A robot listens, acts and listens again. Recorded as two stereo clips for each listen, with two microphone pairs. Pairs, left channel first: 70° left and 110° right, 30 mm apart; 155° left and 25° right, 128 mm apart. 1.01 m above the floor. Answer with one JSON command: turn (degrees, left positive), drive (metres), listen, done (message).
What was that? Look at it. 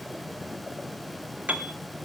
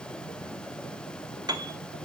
{"turn": -80}
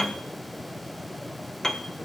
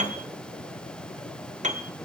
{"done": "Facing the piano, 1 to 2 m away."}